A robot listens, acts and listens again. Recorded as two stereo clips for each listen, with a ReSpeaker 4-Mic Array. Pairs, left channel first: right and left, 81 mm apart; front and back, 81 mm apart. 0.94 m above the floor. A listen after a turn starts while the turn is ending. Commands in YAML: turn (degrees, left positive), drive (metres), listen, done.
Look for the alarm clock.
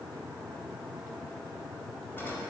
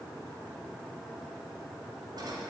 listen: true
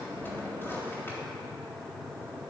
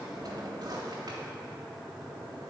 listen: true
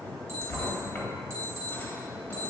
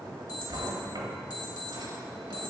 turn: 30
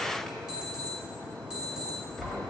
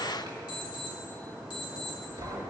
turn: 10
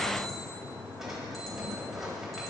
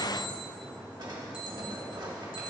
listen: true
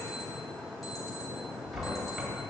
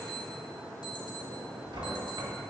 listen: true
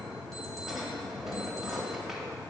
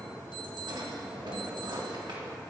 done: "Facing where the alarm clock came from. I can't hear it now."